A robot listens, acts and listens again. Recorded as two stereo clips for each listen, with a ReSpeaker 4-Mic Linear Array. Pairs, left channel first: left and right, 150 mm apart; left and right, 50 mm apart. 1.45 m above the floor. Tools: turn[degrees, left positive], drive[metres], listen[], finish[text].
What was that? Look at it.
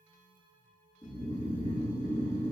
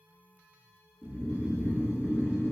Thought: The snoring: about 55° left or 125° left.
Action: turn[55]
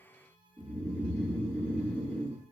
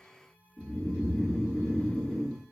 Thought: So it is at 10° left.
Action: turn[10]
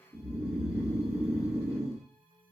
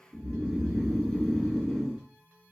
Action: finish[Facing the snoring, 1 to 2 m away.]